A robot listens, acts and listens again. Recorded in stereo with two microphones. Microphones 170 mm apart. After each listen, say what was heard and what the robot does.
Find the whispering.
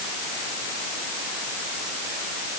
Keep listening.
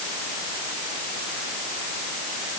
Keep listening.
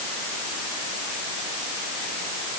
I can't make out whispering to turn to.